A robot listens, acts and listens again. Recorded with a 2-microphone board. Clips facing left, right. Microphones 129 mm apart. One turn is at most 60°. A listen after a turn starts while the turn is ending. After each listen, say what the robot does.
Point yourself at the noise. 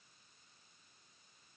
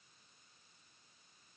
Keep listening.
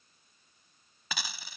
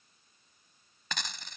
Turn 30° left.
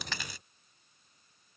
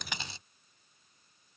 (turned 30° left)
Turn 25° right.
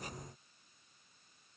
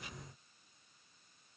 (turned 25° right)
Facing where the dropped coin came from. I can't hear it now.